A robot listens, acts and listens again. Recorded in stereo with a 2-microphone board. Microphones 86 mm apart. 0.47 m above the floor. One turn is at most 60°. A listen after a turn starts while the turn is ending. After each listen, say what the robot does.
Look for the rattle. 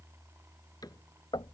Keep listening.
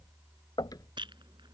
Turn 60° right.
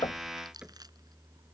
Keep listening.
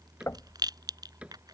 Turn 50° right.
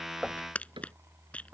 Turn 15° left.
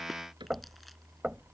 Keep listening.
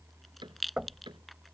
Found it: a rattle, straight ahead.